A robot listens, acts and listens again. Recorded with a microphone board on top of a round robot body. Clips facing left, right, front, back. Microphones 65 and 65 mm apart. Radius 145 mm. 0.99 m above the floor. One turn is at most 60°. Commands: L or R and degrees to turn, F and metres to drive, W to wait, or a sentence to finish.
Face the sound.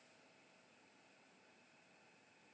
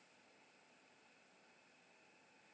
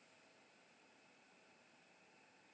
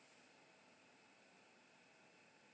W
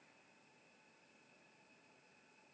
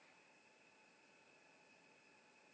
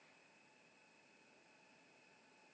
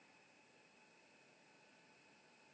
W
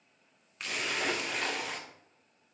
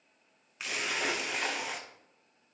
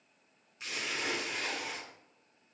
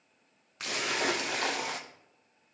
R60
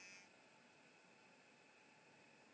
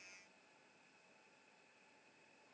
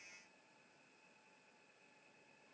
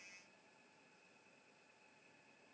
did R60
R60
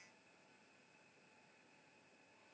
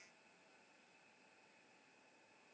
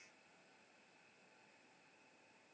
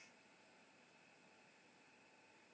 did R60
R55
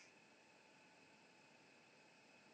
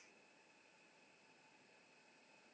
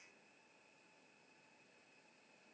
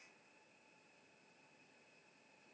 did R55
I heard a splash from this way, but can't make it out now.